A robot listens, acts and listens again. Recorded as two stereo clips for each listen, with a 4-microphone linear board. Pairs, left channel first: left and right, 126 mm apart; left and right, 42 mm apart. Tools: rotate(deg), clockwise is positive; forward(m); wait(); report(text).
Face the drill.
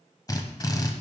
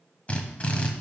rotate(-30)
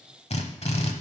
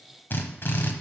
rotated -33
rotate(-115)
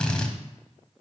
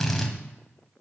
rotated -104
rotate(-10)
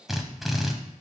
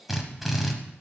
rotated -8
report("Found it: a drill, straight ahead.")